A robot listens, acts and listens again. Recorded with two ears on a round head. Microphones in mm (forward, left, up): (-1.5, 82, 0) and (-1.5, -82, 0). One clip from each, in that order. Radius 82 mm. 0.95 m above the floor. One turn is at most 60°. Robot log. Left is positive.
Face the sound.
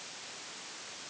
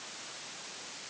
cmd idle
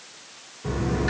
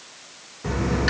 note: The dropped coin: about 60° right or 120° right.
cmd yaw -60
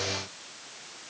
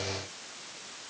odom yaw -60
cmd idle
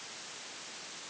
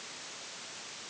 end: I heard a dropped coin, but can't make it out now. It was about straight ahead or 60° right.